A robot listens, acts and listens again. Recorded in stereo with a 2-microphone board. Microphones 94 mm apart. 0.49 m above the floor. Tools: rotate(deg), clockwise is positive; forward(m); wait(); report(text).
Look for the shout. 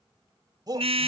rotate(45)
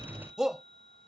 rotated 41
report("Found it: a shout, straight ahead.")